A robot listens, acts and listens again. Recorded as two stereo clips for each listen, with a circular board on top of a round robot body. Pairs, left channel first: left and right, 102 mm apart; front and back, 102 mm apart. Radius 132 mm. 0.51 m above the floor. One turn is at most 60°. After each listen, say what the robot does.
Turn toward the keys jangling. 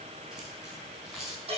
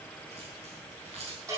Turn 60° right.
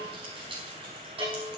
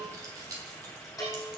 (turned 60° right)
Turn 60° right.
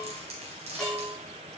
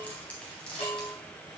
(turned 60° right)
Turn 60° right.
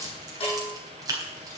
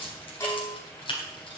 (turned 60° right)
Turn 35° right.
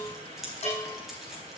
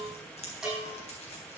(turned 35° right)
Found it: keys jangling, straight ahead.